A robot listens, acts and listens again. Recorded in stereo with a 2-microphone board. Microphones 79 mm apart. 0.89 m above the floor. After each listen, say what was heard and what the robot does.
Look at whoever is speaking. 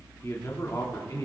The man speaking: about 45° left or 135° left. Turn 45° left.
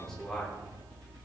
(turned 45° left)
So it is at 10° left. Turn 10° left.
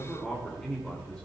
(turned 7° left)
The man speaking is now 10° left. Turn 10° left.
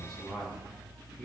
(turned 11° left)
Facing the man speaking, 2 to 4 m away.